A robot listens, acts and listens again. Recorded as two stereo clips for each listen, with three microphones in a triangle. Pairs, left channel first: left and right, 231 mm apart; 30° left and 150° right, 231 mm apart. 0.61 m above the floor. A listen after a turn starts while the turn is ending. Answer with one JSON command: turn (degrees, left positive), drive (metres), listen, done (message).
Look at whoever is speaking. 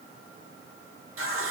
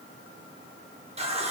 {"listen": true}
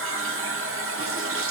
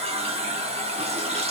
{"listen": true}
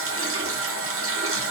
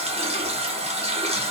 {"done": "I can't make out anyone speaking, only a running tap."}